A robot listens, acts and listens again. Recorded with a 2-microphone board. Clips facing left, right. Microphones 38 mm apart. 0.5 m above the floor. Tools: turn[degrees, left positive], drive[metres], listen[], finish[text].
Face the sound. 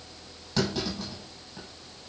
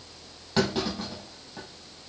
Thought: The clunk: about 25° right or 155° right.
Action: turn[-25]
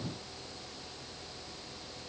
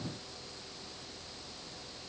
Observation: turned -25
Action: listen[]
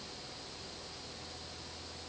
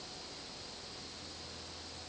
Action: finish[I heard a clunk, but can't make it out now. It was about straight ahead or 130° right.]